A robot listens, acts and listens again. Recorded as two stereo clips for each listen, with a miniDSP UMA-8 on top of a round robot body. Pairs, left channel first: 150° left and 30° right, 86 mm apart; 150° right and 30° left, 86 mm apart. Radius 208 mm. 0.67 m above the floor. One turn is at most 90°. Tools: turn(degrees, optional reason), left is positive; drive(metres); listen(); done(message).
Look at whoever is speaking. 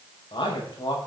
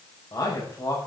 turn(degrees=90, reason="The man speaking: 170° left.")
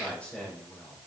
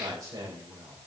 turn(degrees=75, reason="The man speaking is now 75° left.")
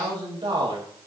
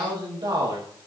done("Facing the man speaking.")